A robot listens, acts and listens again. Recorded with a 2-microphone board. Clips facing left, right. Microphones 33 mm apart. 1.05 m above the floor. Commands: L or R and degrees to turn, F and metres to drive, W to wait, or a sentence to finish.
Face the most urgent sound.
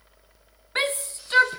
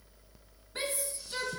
L55
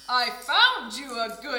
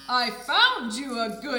Found it: a shout, straight ahead, under 1 m away.